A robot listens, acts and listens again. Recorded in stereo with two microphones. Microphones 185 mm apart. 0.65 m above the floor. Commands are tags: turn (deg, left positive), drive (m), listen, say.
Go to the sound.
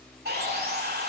<turn deg="-60"/>
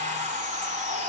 <turn deg="-45"/>
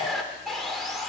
<drive m="1.0"/>
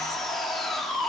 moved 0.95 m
<drive m="1.0"/>
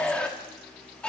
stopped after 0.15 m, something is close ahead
<turn deg="10"/>
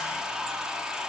<say>I am next to the sawing.</say>